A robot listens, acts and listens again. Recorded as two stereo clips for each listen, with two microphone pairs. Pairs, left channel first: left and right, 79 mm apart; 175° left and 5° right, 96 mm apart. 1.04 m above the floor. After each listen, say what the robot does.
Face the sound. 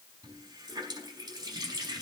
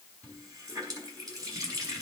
Turn 55° right.
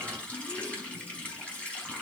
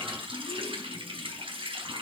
Turn 15° left.
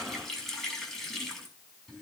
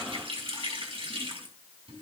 Facing the running tap, over 4 m away.